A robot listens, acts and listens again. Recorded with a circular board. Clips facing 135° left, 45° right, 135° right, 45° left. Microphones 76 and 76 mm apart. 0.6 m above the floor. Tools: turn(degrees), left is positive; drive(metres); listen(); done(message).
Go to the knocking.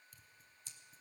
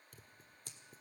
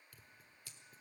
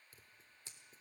listen()
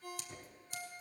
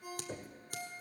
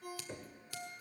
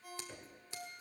turn(degrees=-65)
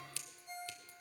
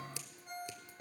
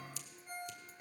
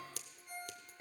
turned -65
turn(degrees=-25)
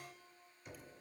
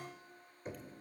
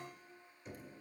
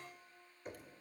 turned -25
drive(metres=1.0)
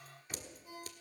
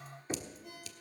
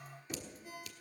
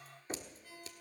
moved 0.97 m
drive(metres=1.0)
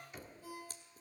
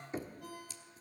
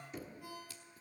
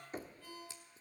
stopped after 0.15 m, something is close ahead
done("I am next to the knocking.")